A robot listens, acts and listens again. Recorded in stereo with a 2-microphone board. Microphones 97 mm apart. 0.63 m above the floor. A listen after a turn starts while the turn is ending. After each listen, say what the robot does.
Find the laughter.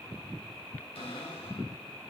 Keep listening.
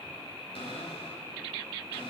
Keep listening.
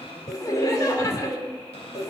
Turn 35° left.
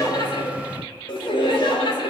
Turn 105° left.
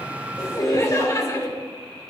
Turn 40° left.
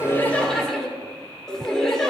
Found it: laughter, straight ahead, 2 to 4 m away.